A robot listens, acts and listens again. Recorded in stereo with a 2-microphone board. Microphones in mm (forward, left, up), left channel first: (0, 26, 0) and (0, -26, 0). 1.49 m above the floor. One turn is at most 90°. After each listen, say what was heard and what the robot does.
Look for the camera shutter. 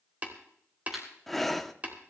Turn 30° right.
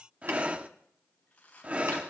Keep listening.
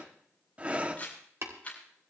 So it is at 25° left. Turn 25° left.
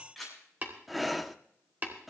Facing the camera shutter, over 4 m away.